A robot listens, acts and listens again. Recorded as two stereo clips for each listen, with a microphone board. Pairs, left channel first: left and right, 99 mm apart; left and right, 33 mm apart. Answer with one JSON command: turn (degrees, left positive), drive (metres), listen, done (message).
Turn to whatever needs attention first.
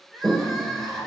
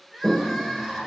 {"turn": 30}
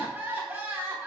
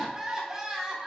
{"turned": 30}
{"turn": -25}
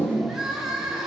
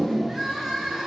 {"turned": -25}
{"done": "Found it: crying, straight ahead."}